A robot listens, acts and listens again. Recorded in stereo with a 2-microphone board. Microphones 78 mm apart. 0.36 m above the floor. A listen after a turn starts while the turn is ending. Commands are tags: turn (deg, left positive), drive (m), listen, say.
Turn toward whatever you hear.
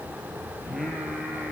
<turn deg="-30"/>
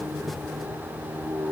<turn deg="-135"/>
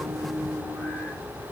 <turn deg="20"/>
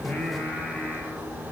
<turn deg="10"/>
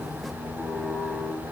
<say>Facing the singing.</say>